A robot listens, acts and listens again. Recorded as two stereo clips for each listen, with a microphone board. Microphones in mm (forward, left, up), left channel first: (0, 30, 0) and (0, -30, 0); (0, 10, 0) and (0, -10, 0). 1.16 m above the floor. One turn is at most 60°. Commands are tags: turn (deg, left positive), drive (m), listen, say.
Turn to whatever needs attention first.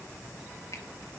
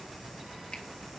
<listen/>
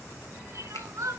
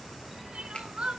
<turn deg="-60"/>
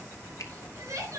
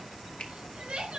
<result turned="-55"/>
<turn deg="-60"/>
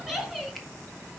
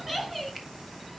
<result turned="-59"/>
<say>Found it: crying, straight ahead.</say>